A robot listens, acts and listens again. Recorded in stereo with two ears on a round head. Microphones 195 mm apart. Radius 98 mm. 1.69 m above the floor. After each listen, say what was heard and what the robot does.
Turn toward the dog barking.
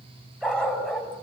Turn 30° left.
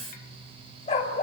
So it is at 145° left. Turn 145° left.
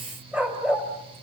Found it: a dog barking, straight ahead.